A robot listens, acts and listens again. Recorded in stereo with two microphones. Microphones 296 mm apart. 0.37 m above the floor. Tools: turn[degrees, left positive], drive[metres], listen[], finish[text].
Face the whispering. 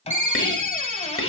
Thought: The whispering: about 45° left or 135° left.
Action: turn[45]
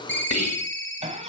Thought: So it is at 80° left.
Action: turn[80]
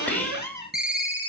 Action: finish[Facing the whispering, 1 to 2 m away.]